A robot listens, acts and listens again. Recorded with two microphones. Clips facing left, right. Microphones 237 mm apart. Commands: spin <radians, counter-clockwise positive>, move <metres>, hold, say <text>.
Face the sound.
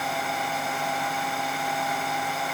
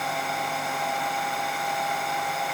hold
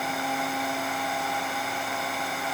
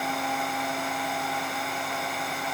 hold
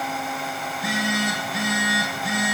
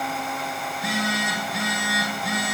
spin 0.52
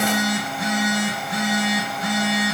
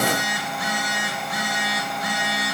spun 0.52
spin 2.62
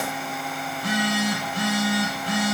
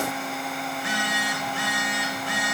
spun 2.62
spin 0.79
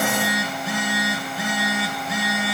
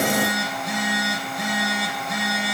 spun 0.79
say Found it: a phone buzzing, straight ahead, over 4 m away.